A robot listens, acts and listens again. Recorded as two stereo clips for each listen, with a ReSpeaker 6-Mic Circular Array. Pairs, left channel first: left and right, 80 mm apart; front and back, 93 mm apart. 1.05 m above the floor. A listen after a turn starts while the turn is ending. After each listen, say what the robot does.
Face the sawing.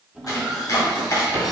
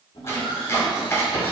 Facing the sawing, 1 to 2 m away.